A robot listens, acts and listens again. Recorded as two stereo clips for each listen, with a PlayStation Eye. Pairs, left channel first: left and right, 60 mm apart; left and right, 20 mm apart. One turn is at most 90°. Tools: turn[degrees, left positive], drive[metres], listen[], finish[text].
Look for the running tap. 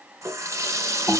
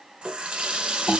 Thought: The running tap: about 60° right or 120° right.
Action: turn[-60]
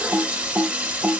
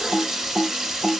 Thought: So it is at 30° right.
Action: turn[-30]
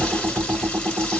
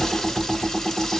Action: listen[]
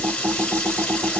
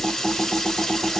Action: listen[]
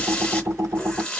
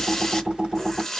Thought: The running tap is now 15° left.
Action: turn[15]
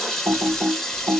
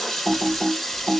Action: finish[Found it: a running tap, straight ahead.]